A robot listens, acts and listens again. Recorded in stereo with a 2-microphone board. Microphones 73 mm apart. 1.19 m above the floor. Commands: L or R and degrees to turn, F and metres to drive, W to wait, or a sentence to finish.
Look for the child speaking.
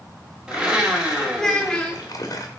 L30
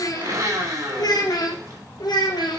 L100
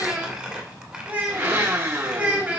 R20
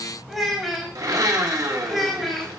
Found it: a child speaking, straight ahead, 2 to 4 m away.